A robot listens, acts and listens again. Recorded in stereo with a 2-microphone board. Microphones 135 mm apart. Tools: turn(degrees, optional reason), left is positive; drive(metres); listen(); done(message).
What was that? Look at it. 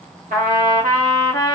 turn(degrees=-75, reason="The trumpet: about 75° right or 105° right.")
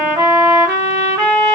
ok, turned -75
turn(degrees=-25, reason="So it is at 25° right.")
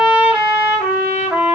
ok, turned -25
turn(degrees=-10, reason="The trumpet is now 10° right.")
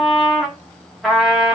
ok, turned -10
done("Found it: a trumpet, straight ahead.")